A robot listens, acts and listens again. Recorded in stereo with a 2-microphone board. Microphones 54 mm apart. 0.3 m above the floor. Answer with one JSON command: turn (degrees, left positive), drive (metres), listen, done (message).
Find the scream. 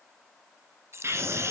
{"turn": -55}
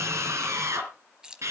{"turn": -65}
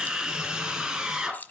{"turn": -15}
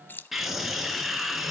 {"done": "Facing the scream, 2 to 4 m away."}